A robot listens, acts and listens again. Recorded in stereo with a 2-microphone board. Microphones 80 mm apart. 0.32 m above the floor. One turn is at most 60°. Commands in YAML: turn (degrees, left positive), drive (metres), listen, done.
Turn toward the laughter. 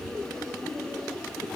listen: true
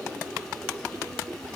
listen: true
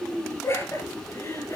turn: 45
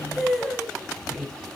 done: "Found it: laughter, straight ahead."